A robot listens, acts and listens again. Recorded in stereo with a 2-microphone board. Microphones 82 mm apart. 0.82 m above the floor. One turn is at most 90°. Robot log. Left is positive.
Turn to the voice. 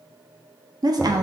note: The woman speaking: about 55° right or 125° right.
cmd yaw -55
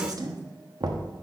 note: So it is at 60° right.
cmd yaw -60
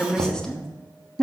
note: The woman speaking is now 10° left.
cmd yaw +10
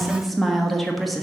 end: Facing the woman speaking, 1 to 2 m away.